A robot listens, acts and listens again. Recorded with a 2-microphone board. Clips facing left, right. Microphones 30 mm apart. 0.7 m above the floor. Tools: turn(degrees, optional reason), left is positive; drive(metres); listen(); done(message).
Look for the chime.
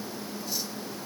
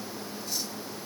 listen()
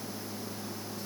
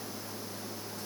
listen()
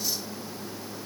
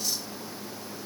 done("I can't make out a chime.")